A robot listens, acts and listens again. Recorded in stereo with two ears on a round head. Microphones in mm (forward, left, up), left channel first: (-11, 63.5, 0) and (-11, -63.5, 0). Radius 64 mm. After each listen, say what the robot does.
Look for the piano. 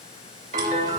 Turn 55° right.
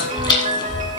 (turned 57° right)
Turn 55° right.
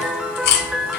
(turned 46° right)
Turn 10° right.
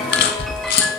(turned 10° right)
Facing the piano.